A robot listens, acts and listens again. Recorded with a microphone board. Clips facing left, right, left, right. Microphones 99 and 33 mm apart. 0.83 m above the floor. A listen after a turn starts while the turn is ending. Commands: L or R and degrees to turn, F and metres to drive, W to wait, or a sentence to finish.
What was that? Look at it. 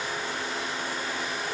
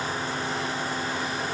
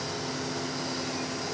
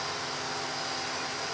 W
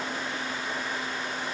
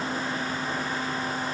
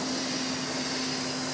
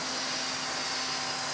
W
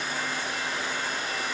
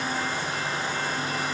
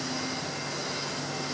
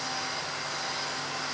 I can't make out anything to turn to.